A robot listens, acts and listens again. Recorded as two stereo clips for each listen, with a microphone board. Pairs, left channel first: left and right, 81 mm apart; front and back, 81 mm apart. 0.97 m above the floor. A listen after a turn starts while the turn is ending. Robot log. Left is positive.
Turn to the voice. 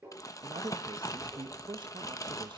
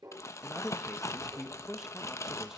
note: The man speaking: 95° right.
cmd yaw -95
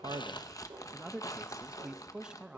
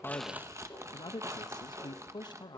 note: The man speaking is now 10° right.
cmd yaw -10
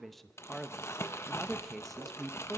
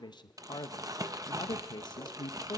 end: Facing the man speaking, under 1 m away.